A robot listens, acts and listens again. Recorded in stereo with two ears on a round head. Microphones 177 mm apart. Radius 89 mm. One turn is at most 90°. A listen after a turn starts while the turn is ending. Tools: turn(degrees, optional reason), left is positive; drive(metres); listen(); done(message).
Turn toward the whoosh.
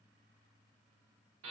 listen()
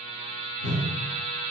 turn(degrees=55, reason="The whoosh: about 55° left or 125° left.")
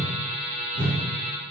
turn(degrees=50, reason="So it is at 50° left.")
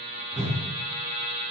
turn(degrees=15, reason="The whoosh is now 15° left.")
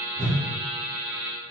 done("Facing the whoosh, 1 to 2 m away.")